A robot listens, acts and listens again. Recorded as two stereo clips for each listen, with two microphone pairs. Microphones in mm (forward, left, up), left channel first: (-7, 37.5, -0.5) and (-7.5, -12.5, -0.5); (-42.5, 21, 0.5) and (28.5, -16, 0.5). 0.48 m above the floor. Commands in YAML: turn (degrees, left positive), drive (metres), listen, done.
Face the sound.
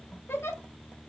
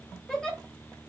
turn: 70
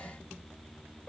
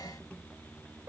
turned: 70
turn: 30
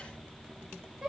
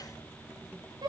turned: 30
turn: -15
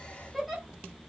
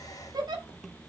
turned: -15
done: "Facing the giggle."